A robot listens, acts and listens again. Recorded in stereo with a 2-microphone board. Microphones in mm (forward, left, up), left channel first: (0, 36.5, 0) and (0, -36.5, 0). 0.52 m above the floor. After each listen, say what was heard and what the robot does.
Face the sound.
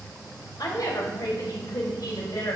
The woman speaking: about 60° left or 120° left. Turn 60° left.
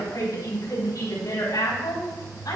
So it is at 55° left. Turn 55° left.
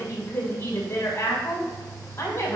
The woman speaking is now 30° left. Turn 30° left.
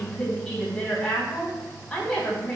Facing the woman speaking.